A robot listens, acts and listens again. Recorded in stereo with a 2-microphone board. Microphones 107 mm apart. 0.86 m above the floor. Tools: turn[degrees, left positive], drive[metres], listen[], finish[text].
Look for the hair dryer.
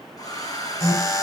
Thought: The hair dryer: about 35° left or 145° left.
Action: turn[35]
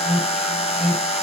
Action: listen[]
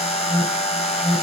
Action: listen[]
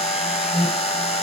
Action: finish[I heard a hair dryer, but can't make it out now. It was about straight ahead or 110° left.]